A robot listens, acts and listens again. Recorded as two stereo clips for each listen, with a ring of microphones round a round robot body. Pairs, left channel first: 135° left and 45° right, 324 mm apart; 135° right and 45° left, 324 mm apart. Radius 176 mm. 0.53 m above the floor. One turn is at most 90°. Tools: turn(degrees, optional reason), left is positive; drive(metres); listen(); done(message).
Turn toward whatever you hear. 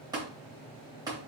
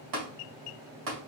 turn(degrees=35, reason="The tapping: 35° left.")
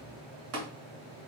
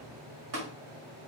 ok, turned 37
done("Facing the tapping.")